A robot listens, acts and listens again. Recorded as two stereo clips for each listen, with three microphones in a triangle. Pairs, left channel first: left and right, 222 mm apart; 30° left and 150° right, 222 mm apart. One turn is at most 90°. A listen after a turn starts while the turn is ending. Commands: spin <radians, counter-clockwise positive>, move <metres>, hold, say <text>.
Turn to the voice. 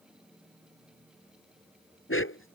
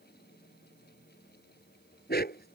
hold
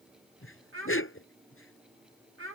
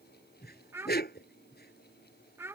spin -1.22
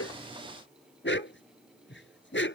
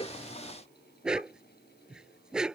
hold
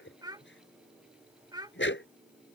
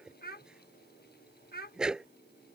spin -0.35
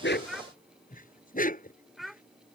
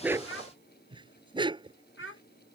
say Facing the child speaking.